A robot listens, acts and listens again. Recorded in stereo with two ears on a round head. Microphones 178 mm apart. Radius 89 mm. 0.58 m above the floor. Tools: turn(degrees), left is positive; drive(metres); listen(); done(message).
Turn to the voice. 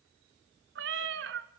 listen()
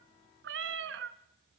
listen()
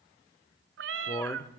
turn(degrees=30)
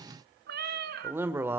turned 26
turn(degrees=-15)
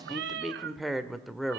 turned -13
done("Facing the man speaking, 1 to 2 m away.")